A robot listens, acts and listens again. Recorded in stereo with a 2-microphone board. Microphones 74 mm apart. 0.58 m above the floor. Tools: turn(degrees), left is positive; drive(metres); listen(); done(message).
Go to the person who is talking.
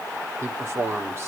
turn(degrees=-40)
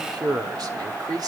turn(degrees=-100)
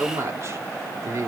turn(degrees=-45)
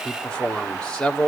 turn(degrees=15)
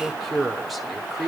drive(metres=1.0)
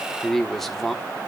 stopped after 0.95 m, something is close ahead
done("I am next to the man speaking.")